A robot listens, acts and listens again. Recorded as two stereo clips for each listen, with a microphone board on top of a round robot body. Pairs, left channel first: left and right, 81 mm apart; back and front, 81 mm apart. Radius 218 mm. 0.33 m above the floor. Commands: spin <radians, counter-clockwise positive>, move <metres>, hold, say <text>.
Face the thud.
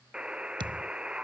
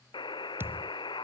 spin -1.13
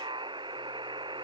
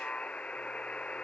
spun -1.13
say Facing where the thud came from. I can't hear it now.